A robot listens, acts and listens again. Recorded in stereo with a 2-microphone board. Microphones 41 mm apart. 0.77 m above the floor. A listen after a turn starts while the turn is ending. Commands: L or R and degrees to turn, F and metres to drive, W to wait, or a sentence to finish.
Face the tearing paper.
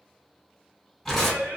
L30
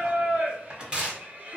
R25
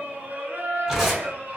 Facing the tearing paper.